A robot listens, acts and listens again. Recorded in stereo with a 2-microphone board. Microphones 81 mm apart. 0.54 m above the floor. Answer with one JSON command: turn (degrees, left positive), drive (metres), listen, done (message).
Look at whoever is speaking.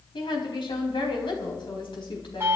{"turn": 70}
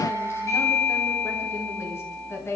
{"turn": 35}
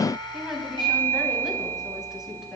{"done": "Facing the woman speaking."}